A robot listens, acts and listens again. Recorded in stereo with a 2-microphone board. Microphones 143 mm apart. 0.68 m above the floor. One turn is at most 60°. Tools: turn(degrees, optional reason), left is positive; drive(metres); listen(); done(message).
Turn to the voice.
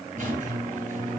listen()
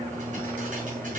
listen()
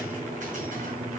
done("I can't make out anyone speaking to turn to.")